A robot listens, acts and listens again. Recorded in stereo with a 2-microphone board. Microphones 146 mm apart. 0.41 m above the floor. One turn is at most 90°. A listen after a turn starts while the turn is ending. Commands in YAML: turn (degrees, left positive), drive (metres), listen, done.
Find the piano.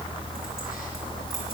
listen: true
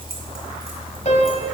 turn: 50
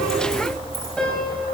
listen: true
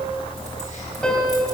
done: "Found it: a piano, straight ahead, 2 to 4 m away."